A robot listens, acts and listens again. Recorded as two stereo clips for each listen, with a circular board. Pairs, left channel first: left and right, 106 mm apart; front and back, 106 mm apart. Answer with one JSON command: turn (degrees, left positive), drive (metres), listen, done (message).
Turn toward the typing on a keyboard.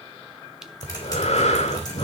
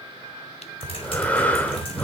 {"turn": 35}
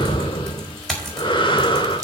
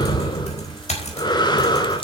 {"done": "Facing the typing on a keyboard, over 4 m away."}